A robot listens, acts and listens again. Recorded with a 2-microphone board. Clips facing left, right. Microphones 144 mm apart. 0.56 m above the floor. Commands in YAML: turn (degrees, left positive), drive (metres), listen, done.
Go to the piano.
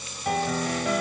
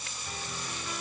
turn: 75
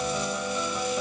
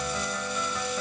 turn: 15
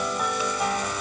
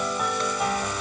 drive: 1.0
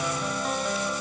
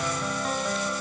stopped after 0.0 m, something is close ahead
done: "Something is in my way. I am facing the piano but have not reached it."